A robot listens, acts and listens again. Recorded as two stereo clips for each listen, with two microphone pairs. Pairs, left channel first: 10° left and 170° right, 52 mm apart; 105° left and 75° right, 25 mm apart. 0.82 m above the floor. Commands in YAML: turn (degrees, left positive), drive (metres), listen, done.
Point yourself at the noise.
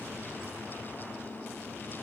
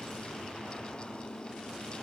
listen: true
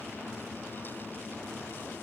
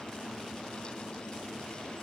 listen: true
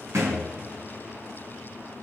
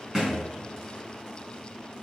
turn: -145
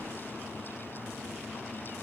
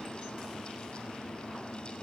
done: "I heard a thud from this way, but can't make it out now."